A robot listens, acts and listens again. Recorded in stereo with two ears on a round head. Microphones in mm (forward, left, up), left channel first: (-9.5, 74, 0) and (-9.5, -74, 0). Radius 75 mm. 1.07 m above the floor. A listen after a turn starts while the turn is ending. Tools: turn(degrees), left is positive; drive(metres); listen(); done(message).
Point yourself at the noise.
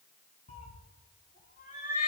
turn(degrees=50)
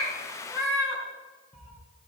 done("Facing the cat meowing.")